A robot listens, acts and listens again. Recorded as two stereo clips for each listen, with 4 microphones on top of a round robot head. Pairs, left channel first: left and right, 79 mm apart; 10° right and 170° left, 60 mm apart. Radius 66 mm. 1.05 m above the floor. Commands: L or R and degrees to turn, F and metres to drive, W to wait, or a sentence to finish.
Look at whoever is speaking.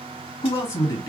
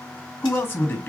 L35
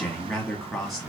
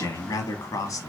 Found it: a man speaking, straight ahead, 1 to 2 m away.